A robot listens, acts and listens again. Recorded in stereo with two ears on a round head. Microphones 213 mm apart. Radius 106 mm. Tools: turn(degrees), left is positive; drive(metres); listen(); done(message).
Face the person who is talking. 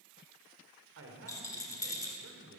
turn(degrees=-60)
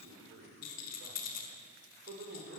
turn(degrees=-55)
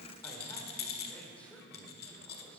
done("Facing the man speaking, 2 to 4 m away.")